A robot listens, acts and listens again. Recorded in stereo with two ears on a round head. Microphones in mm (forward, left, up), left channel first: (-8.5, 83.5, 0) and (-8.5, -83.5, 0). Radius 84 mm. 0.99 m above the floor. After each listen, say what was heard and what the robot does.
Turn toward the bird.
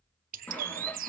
The bird: about 45° right or 135° right. Turn 45° right.
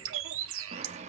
So it is at 90° right. Turn 90° right.
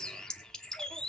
Facing the bird, 1 to 2 m away.